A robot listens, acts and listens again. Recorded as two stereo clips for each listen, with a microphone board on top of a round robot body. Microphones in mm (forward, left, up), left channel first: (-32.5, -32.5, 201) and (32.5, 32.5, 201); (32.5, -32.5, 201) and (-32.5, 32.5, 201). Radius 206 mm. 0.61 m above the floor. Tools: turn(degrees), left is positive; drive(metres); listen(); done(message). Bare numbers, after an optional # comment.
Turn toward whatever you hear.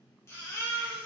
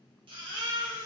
# The baby crying: 160° left.
turn(160)
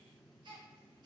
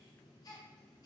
done("Found it: a baby crying, straight ahead, under 1 m away.")